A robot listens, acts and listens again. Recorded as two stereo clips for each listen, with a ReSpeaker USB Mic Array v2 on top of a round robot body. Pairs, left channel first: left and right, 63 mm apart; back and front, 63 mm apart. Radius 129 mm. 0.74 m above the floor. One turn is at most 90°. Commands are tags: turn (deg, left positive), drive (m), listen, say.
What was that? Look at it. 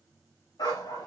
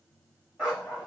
<turn deg="80"/>
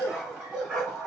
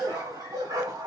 <turn deg="-10"/>
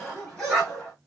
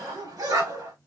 <say>Facing the dog barking.</say>